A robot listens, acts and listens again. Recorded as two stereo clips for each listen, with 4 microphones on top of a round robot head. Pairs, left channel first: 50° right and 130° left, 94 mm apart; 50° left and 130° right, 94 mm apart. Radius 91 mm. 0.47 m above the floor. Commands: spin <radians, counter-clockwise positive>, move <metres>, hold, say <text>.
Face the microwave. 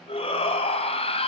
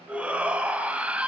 hold
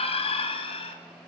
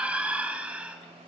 hold
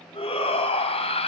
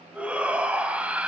say I can't make out a microwave, only a shout.